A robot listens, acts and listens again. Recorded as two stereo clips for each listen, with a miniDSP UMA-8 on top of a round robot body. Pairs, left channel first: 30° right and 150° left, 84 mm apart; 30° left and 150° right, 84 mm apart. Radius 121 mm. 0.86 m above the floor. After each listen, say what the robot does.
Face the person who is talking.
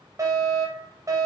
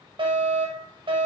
Keep listening.
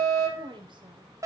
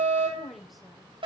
Turn 120° left.
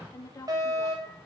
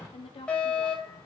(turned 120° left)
Turn 25° left.
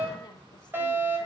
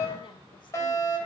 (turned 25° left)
Keep listening.
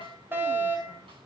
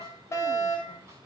Keep listening.
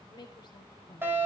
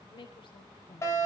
Found it: a woman speaking, straight ahead.